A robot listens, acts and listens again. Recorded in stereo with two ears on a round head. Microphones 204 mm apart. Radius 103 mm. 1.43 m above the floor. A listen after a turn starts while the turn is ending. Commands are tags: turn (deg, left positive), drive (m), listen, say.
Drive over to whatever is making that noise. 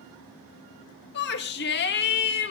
<turn deg="45"/>
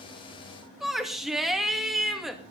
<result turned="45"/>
<drive m="1.0"/>
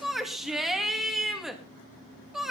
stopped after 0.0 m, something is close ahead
<say>Blocked. The shout is further on, straight ahead.</say>